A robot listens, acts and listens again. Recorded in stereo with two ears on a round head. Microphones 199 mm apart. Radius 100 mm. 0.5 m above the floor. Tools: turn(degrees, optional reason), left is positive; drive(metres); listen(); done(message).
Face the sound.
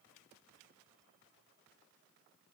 listen()
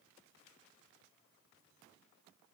listen()
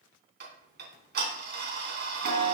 turn(degrees=-50, reason="The ticking: about 50° right or 130° right.")
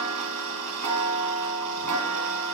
turn(degrees=-80, reason="So it is at 80° right.")
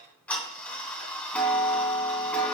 done("Facing the ticking, 2 to 4 m away.")